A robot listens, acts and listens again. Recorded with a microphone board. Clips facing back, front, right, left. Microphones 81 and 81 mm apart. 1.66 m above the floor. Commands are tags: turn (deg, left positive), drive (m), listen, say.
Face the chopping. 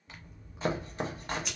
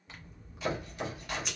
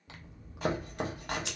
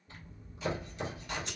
<turn deg="-125"/>
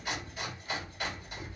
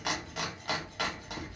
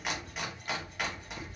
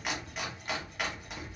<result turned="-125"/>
<say>Facing the chopping.</say>